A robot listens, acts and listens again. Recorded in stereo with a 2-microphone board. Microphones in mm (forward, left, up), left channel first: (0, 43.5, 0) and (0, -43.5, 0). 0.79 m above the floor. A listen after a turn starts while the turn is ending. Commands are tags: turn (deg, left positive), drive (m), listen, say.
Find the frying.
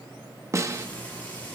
<turn deg="20"/>
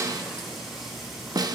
<say>Facing the frying.</say>